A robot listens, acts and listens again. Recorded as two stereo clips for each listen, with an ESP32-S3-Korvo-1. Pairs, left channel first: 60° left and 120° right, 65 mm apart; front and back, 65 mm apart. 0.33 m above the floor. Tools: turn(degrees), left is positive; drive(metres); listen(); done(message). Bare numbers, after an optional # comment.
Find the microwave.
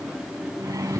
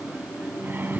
# The microwave: 125° right.
turn(-125)
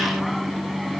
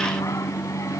# The microwave is now 30° right.
turn(-30)
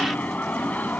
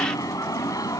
done("Facing the microwave.")